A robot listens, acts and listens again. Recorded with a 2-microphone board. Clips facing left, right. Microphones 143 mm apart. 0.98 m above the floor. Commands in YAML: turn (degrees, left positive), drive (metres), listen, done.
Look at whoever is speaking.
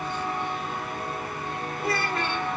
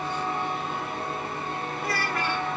turn: 25
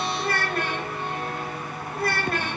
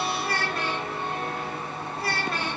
turn: 125
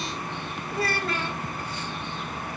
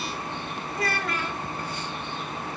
turn: 30
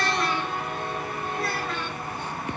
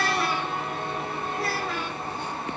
done: "Found it: a child speaking, straight ahead, 2 to 4 m away."